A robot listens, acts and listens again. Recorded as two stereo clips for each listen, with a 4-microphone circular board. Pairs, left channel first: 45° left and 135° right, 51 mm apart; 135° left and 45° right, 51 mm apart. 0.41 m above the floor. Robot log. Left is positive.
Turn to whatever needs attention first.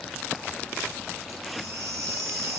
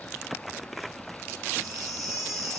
note: The baby crying: 135° right.
cmd yaw -135
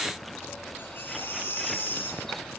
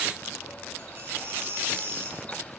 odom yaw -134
end: Facing the baby crying, over 4 m away.